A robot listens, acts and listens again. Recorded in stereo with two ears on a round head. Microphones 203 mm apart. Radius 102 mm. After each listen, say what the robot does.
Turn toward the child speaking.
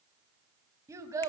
Turn 30° right.
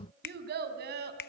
Turn 130° right.
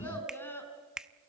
Turn 10° left.
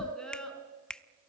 Facing the child speaking.